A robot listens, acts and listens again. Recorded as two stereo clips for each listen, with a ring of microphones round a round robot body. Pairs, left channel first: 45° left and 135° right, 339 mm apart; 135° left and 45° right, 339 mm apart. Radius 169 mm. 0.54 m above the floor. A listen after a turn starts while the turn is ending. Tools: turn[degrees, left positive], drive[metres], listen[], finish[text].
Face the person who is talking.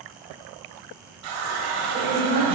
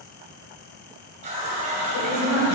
Thought: The woman speaking: 170° left.
Action: turn[170]
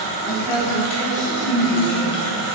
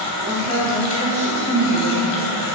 Thought: The woman speaking is now 25° left.
Action: turn[25]
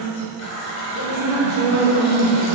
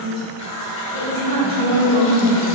Thought: The woman speaking is now 30° left.
Action: turn[30]
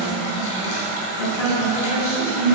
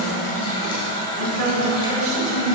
Action: finish[Found it: a woman speaking, straight ahead.]